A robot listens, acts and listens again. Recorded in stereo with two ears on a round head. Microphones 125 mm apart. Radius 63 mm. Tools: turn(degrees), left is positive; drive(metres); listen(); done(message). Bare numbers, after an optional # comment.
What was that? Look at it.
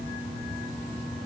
listen()
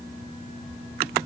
listen()
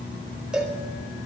turn(-30)
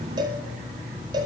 # So it is at 145° right.
turn(-145)
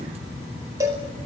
# The cowbell is now 25° right.
turn(-25)
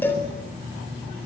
# The cowbell is now 15° left.
turn(15)
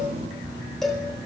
done("Facing the cowbell, over 4 m away.")